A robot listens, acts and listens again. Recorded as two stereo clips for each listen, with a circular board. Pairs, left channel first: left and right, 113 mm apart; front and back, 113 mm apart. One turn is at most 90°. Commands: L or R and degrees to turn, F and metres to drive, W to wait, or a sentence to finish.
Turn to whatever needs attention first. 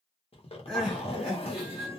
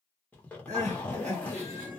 L90
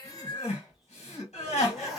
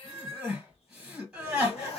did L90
L90
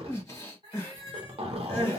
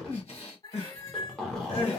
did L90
L25
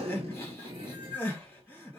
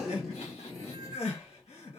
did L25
L15
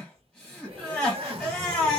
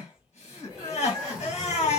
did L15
Found it: crying, straight ahead.